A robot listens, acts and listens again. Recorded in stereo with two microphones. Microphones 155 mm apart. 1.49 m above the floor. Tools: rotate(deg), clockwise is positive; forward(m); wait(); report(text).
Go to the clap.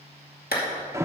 rotate(-90)
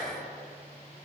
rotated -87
wait()
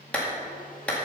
rotate(-10)
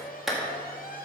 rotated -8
forward(1.0)
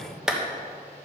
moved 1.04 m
forward(1.0)
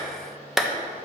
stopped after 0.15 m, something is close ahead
report("I am next to the clap.")